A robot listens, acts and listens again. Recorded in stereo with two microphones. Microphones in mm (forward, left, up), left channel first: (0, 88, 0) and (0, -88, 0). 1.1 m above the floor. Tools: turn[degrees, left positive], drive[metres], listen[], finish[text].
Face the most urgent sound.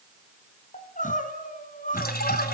Thought: The crying: about 50° left or 130° left.
Action: turn[50]
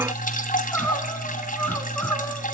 Thought: So it is at 15° left.
Action: turn[15]
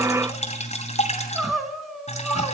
Action: finish[Facing the crying.]